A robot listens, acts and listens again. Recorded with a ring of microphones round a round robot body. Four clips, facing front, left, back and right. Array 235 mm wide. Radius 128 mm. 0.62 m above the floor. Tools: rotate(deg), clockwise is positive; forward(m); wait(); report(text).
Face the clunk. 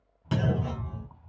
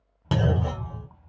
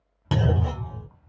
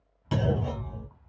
rotate(-130)
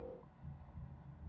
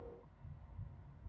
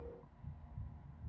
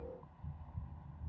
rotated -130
report("I heard a clunk from this way, but can't make it out now.")